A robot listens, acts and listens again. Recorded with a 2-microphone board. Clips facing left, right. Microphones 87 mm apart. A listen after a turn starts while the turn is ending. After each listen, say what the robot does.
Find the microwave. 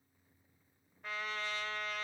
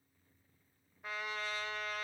Keep listening.
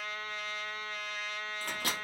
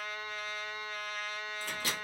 Turn 55° left.
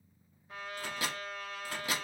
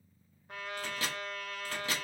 Turn 15° left.
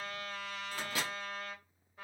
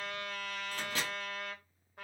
Turn 10° left.
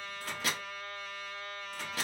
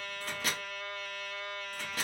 Found it: a microwave, straight ahead.